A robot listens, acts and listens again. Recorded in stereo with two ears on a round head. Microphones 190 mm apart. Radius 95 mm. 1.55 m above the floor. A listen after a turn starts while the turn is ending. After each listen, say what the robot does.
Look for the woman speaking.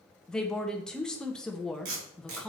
Turn 30° left.
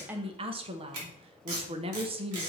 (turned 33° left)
Turn 25° right.
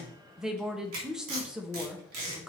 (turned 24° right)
Facing the woman speaking, under 1 m away.